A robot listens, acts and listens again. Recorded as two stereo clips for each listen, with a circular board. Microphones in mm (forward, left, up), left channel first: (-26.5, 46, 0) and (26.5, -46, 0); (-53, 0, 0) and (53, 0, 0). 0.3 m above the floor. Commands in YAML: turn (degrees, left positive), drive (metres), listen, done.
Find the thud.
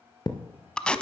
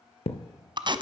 turn: 170
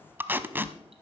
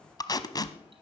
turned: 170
done: "I heard a thud from this way, but can't make it out now."